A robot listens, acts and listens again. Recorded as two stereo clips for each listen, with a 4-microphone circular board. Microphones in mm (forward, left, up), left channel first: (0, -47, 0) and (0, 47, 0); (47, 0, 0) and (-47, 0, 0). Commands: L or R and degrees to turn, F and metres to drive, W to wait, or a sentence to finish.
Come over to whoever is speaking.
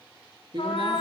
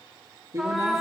L125
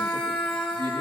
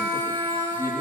L50
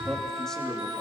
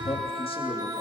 W
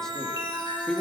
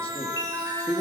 F1.0
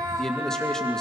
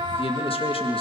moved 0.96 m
F1.0
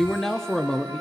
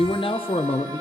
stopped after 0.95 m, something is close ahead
I am next to the man speaking.